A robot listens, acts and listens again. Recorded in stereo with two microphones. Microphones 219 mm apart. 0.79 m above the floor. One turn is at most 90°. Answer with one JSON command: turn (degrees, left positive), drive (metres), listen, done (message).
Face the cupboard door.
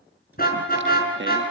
{"listen": true}
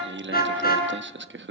{"listen": true}
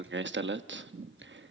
{"done": "I can't make out a cupboard door to turn to."}